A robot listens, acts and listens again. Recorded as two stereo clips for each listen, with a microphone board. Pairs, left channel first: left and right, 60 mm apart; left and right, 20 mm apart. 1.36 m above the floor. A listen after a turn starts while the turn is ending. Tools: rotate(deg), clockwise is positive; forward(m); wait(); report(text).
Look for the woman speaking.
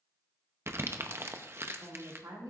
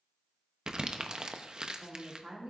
rotate(90)
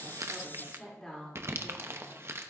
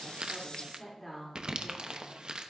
rotate(-10)
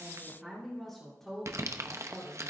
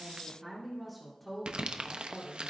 report("Found it: a woman speaking, straight ahead, 2 to 4 m away.")